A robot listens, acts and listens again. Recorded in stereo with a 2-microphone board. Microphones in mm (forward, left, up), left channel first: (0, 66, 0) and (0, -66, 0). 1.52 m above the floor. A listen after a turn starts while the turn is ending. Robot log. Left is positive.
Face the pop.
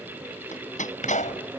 note: The pop: about 70° left or 110° left.
cmd yaw +70
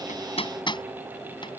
cmd idle
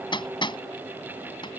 end: I heard a pop, but can't make it out now. It was about straight ahead or 40° left.